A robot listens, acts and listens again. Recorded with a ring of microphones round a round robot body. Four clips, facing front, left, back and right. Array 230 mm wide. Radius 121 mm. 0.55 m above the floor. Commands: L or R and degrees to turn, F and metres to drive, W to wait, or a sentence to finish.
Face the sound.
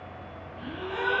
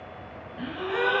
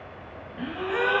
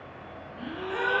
L150
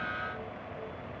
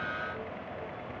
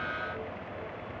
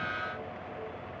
I heard a gasp from this way, but can't make it out now.